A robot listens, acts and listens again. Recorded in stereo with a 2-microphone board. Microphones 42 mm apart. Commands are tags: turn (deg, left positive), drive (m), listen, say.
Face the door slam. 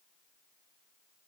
<listen/>
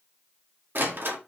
<turn deg="-65"/>
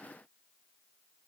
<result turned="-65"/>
<listen/>
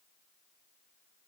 <say>I heard a door slam, but can't make it out now. It was about straight ahead or 50° right.</say>